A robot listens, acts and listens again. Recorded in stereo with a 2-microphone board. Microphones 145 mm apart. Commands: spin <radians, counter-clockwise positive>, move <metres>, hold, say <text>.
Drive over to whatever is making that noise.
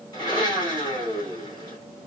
spin 0.52
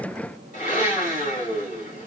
spin 2.09
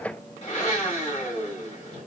spin 0.87
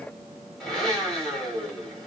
move 1.0
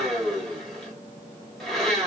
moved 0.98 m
move 1.0
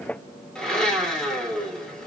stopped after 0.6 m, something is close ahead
say Arrived at the blender, straight ahead.